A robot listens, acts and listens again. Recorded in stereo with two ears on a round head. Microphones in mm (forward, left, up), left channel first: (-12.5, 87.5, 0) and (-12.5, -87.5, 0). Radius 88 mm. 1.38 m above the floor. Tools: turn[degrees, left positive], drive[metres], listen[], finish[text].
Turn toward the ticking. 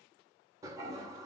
Action: listen[]
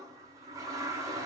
Action: listen[]
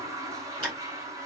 Action: turn[-30]
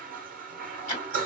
Thought: So it is at 25° left.
Action: turn[25]
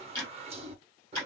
Thought: The ticking is now 10° left.
Action: turn[10]
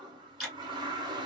Action: finish[Found it: ticking, straight ahead.]